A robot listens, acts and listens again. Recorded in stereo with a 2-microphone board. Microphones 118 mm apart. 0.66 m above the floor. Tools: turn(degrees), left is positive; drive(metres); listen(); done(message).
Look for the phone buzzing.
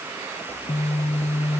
turn(degrees=55)
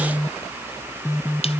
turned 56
turn(degrees=30)
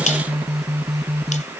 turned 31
done("Facing the phone buzzing.")